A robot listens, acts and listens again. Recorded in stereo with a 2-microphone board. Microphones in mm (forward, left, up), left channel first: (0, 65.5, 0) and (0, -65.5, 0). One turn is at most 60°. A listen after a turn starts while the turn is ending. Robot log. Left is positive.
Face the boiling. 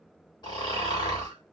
cmd idle
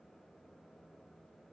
cmd idle
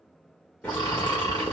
cmd yaw +30
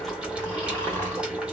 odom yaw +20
note: So it is at 10° right.
cmd yaw -10
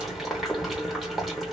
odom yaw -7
end: Facing the boiling, 1 to 2 m away.